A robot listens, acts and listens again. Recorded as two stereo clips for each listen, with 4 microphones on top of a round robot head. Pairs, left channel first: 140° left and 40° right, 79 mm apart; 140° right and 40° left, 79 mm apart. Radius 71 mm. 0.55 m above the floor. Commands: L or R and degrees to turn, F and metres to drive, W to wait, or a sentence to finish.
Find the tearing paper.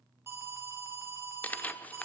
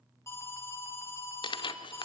R150
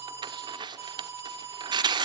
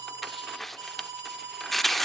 R50
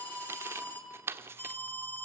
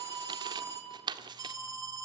L20
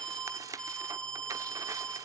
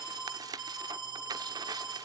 Found it: tearing paper, straight ahead, under 1 m away.